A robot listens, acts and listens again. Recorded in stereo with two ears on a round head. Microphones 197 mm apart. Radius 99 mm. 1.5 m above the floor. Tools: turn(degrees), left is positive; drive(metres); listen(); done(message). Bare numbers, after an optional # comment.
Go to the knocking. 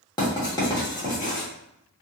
listen()
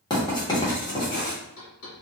# The knocking: about 70° left or 110° left.
turn(70)
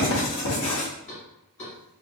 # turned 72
# So it is at 30° left.
turn(30)
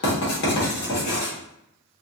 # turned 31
listen()
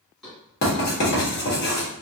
drive(1.0)
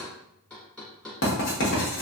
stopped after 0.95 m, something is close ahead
done("Arrived at the knocking, straight ahead.")